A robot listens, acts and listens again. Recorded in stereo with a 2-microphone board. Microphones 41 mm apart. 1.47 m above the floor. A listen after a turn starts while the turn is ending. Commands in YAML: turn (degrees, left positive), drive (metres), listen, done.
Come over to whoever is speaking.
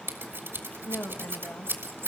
turn: 90
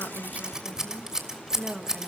turn: -15
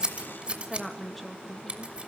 drive: 1.0
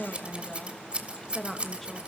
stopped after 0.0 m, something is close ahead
done: "Blocked. The woman speaking is further on, straight ahead."